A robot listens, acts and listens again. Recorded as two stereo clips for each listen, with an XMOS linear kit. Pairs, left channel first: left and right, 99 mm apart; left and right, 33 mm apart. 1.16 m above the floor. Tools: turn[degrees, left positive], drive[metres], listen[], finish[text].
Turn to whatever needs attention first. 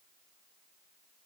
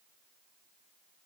Action: listen[]
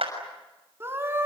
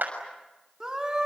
Thought: The scream: about 25° right or 155° right.
Action: turn[-25]
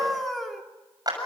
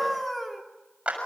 Action: finish[Facing the scream.]